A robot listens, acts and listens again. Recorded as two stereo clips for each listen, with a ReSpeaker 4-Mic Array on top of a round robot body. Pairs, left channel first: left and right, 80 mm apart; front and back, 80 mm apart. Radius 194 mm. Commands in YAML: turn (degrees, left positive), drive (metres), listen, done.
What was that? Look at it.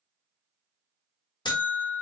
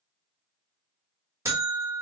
turn: 125
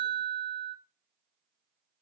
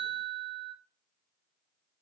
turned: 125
turn: 40
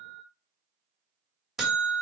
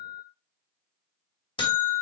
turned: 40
done: "Facing the buzzer."